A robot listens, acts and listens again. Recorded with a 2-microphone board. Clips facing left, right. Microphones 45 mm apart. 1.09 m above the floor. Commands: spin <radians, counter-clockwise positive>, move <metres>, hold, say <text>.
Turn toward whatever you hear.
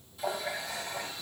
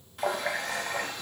spin -1.13
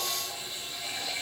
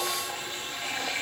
spin -0.87
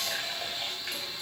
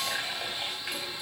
spin -0.17
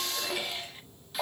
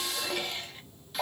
say Found it: a running tap, straight ahead, under 1 m away.